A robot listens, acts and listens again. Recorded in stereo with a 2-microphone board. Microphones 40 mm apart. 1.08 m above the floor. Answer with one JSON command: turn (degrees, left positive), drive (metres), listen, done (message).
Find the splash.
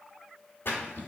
{"turn": 65}
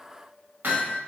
{"listen": true}
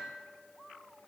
{"done": "I heard a splash, but can't make it out now. It was about straight ahead or 50° left."}